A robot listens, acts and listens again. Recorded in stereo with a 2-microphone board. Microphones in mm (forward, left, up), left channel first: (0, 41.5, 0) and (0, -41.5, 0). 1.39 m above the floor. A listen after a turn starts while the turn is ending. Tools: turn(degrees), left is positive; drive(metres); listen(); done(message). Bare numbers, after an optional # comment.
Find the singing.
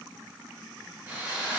listen()
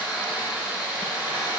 listen()
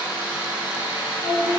# The singing: about 40° left or 140° left.
turn(40)
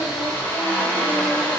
listen()
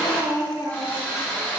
# So it is at 110° left.
turn(110)
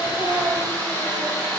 listen()
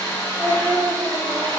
# The singing is now 10° right.
turn(-10)
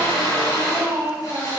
done("Found it: singing, straight ahead, over 4 m away.")